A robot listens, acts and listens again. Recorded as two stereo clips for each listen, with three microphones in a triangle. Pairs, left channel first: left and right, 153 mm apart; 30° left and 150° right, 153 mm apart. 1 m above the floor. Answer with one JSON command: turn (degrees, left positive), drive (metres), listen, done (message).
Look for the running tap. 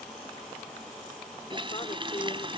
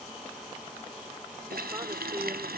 {"turn": -150}
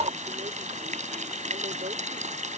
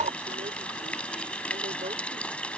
{"turn": -55}
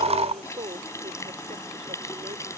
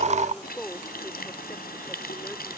{"turn": 20}
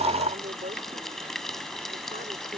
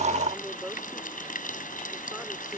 {"done": "Found it: a running tap, straight ahead."}